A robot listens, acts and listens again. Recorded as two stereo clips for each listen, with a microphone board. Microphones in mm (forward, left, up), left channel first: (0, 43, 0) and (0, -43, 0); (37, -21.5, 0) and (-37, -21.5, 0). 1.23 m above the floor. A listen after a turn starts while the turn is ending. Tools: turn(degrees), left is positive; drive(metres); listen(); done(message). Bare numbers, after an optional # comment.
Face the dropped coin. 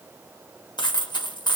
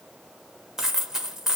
# The dropped coin: 95° left.
turn(95)
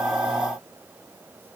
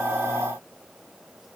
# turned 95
done("I heard a dropped coin from this way, but can't make it out now.")